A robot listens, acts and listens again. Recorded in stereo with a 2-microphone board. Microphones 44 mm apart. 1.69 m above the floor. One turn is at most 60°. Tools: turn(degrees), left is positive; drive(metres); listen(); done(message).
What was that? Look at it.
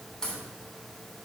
turn(degrees=15)
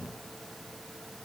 listen()
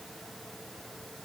done("I heard a crack, but can't make it out now. It was about straight ahead or 150° left.")